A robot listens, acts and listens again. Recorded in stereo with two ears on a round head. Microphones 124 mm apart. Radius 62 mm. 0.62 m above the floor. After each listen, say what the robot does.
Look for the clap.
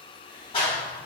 Turn 35° left.
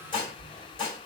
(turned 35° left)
Keep listening.
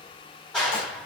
Found it: a clap, straight ahead.